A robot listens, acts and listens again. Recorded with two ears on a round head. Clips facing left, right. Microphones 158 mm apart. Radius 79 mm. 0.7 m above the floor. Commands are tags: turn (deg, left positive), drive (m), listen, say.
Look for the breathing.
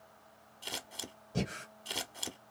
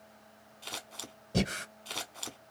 <turn deg="-90"/>
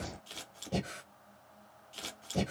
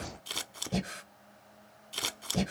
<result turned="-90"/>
<say>Found it: breathing, straight ahead.</say>